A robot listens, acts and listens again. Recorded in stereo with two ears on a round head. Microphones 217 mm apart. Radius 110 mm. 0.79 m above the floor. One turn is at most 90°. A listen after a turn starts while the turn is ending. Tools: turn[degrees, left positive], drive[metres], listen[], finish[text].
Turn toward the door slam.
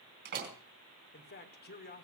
Thought: The door slam: about 45° right or 135° right.
Action: turn[-45]
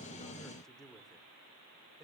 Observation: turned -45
Action: listen[]
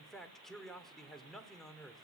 Action: finish[I heard a door slam, but can't make it out now. It was about straight ahead or 90° right.]